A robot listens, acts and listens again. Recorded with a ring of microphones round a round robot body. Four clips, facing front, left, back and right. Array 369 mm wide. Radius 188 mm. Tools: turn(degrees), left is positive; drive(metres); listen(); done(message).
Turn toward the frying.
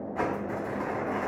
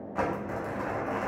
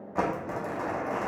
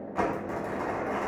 listen()
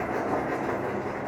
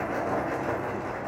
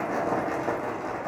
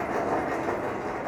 listen()
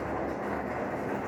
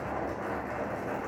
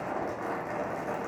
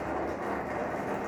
done("I can't make out frying, only crumpling.")